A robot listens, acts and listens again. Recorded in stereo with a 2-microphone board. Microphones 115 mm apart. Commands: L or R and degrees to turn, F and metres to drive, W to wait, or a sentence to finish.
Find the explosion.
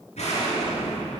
L75
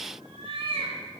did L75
W
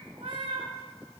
I heard an explosion, but can't make it out now. It was about straight ahead or 30° left.